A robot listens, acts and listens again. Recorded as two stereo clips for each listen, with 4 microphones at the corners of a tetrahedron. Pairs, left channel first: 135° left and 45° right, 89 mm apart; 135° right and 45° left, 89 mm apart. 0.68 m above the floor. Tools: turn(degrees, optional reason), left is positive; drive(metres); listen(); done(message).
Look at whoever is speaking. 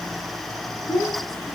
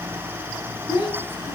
turn(degrees=-170, reason="The child speaking: 170° right.")
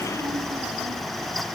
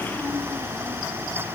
listen()
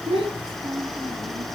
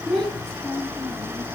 turn(degrees=-50, reason="The child speaking is now 50° right.")
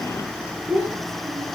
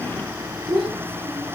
turn(degrees=25, reason="The child speaking is now 25° left.")
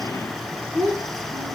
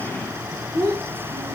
done("Facing the child speaking, over 4 m away.")